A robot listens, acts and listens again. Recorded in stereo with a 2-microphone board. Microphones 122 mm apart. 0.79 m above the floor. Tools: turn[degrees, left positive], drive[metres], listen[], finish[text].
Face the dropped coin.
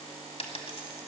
Thought: The dropped coin: about 55° left or 125° left.
Action: turn[55]
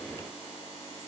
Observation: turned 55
Action: listen[]
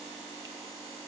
Action: finish[I heard a dropped coin, but can't make it out now. It was about straight ahead or 70° left.]